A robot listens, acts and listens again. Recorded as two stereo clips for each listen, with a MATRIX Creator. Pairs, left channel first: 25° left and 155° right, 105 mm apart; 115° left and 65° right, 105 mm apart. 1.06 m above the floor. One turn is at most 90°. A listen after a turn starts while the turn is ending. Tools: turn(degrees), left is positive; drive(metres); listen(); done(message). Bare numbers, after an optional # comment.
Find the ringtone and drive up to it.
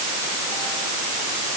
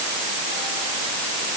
listen()
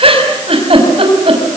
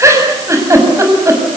listen()
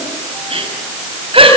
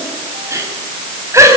done("I can't make out a ringtone to turn to.")